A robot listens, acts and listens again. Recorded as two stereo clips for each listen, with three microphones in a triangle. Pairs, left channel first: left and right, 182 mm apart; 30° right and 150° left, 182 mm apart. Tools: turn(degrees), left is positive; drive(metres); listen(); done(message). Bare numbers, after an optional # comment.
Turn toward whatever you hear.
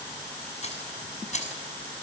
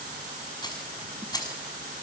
# The keys jangling: 40° left.
turn(40)
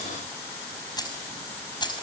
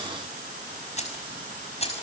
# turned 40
# The keys jangling is now 25° left.
turn(25)
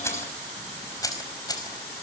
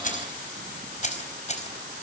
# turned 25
# The keys jangling is now 20° left.
turn(20)
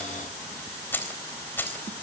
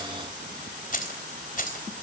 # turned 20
# The keys jangling is now 10° left.
turn(10)
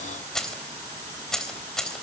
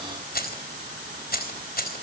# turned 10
done("Facing the keys jangling, 2 to 4 m away.")